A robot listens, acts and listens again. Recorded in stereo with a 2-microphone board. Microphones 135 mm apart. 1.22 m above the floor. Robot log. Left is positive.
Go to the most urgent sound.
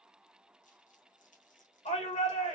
note: The shout: about 60° left or 120° left.
cmd yaw +60
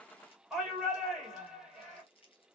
cmd fwd 1.0
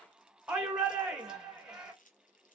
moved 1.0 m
cmd fwd 1.0
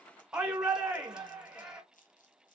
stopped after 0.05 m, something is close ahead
end: Arrived at the shout, straight ahead.